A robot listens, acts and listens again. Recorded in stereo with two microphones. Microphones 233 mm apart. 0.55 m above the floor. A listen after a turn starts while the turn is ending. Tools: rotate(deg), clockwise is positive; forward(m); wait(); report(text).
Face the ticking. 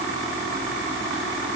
wait()
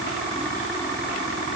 wait()
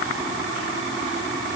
report("I can't make out ticking.")